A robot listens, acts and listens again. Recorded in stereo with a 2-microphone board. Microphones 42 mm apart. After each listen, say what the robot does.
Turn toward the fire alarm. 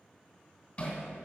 Keep listening.
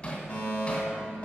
Turn 30° left.
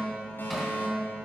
Turn 115° left.
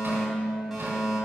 Found it: a fire alarm, straight ahead, 2 to 4 m away.